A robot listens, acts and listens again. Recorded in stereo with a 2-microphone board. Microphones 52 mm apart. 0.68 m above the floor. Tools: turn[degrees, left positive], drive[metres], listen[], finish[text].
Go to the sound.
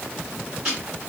Thought: The ticking: about 20° right or 160° right.
Action: turn[-20]
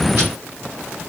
Action: listen[]
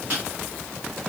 Thought: So it is at 140° right.
Action: turn[-140]
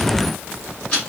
Thought: The ticking is now 25° left.
Action: turn[25]
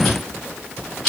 Action: drive[1.0]
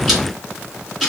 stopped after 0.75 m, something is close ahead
Action: finish[Arrived at the ticking, straight ahead.]